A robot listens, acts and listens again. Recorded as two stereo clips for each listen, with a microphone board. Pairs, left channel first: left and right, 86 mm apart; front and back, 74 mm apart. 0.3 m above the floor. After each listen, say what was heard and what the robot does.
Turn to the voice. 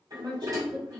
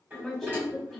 The woman speaking: 85° right. Turn 85° right.
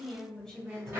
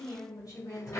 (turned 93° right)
Found it: a woman speaking, straight ahead.